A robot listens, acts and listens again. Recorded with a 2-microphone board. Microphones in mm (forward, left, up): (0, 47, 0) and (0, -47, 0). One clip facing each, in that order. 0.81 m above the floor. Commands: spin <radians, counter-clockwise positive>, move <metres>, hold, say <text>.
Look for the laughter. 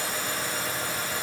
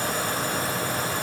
hold
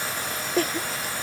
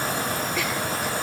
spin 0.70
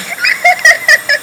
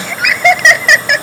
say Facing the laughter.